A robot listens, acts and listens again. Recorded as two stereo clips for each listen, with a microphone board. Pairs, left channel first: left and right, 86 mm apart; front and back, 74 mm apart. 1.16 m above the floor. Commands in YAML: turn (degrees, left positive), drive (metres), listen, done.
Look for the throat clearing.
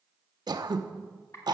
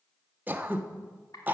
turn: -115
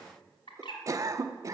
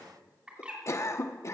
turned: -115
turn: -45
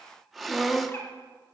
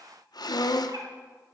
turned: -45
done: "Facing the throat clearing, under 1 m away."